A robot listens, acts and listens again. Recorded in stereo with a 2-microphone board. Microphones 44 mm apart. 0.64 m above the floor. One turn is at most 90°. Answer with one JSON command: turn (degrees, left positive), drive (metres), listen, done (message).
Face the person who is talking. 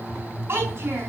{"turn": -65}
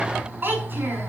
{"turn": -50}
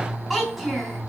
{"done": "Found it: a child speaking, straight ahead, over 4 m away."}